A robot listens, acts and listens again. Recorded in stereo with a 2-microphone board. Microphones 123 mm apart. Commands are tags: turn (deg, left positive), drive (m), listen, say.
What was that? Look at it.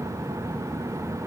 <listen/>
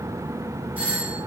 <turn deg="-30"/>
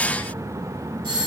<turn deg="-135"/>
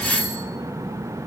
<say>Found it: a doorbell, straight ahead, 1 to 2 m away.</say>